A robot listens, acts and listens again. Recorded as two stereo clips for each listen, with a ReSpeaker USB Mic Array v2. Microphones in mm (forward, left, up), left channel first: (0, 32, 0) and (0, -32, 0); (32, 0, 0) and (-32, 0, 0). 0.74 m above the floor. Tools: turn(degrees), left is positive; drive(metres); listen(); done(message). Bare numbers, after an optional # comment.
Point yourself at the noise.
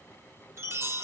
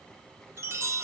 # The chime: 135° right.
turn(-135)
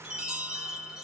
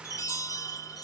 # The chime is now 15° right.
turn(-15)
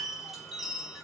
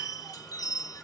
done("Found it: a chime, straight ahead.")